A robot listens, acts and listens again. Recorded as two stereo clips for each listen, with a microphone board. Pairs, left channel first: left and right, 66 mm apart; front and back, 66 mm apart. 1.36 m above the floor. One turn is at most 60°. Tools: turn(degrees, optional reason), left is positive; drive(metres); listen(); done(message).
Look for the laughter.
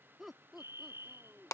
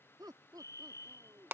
turn(degrees=-60, reason="The laughter: 170° right.")
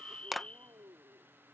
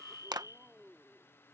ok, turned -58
turn(degrees=-60, reason="The laughter is now 105° right.")
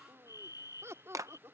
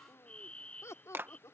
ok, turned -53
turn(degrees=-40, reason="The laughter is now 40° right.")
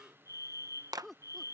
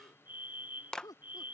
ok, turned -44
done("Facing the laughter.")